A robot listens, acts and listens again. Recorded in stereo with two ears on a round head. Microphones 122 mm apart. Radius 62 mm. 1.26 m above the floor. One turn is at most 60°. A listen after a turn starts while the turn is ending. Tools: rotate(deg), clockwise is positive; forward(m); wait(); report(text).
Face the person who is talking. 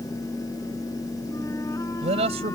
rotate(45)
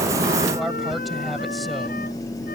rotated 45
wait()
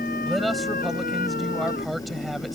report("Found it: a man speaking, straight ahead.")